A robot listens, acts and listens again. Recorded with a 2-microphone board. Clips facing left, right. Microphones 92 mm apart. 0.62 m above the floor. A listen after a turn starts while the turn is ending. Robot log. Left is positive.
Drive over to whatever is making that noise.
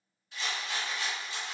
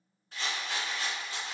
note: The rattle: about 40° right or 140° right.
cmd yaw -40
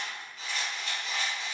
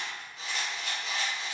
note: So it is at 100° right.
cmd yaw -100
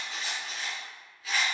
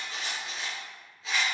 note: The rattle is now 20° right.
cmd yaw -20
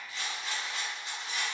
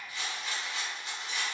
cmd fwd 1.0
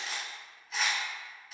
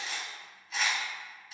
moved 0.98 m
cmd fwd 1.0
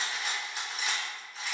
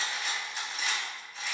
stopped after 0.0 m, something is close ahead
end: Arrived at the rattle, straight ahead.